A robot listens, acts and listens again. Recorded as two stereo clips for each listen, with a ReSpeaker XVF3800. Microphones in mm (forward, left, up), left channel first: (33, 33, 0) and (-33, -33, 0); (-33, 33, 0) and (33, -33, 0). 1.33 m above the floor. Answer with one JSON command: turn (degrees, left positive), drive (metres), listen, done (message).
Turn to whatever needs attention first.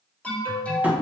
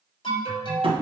{"turn": 120}
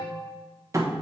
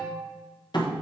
{"done": "Found it: an alarm, straight ahead."}